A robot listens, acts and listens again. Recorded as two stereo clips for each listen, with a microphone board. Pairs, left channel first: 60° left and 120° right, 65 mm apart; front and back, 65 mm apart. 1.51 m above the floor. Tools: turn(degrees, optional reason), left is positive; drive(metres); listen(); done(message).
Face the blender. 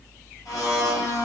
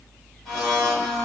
turn(degrees=75, reason="The blender: 75° left.")
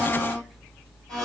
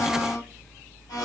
turn(degrees=-20, reason="The blender is now 20° right.")
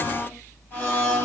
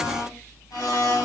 done("Found it: a blender, straight ahead.")